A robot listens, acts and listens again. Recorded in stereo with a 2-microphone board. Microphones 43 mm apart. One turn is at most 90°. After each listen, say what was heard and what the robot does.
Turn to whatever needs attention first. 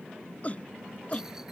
The shout: about 35° left or 145° left. Turn 35° left.
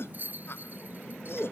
So it is at 110° left. Turn 90° left.
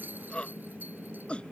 The shout is now 25° left. Turn 25° left.
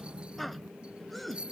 Found it: a shout, straight ahead.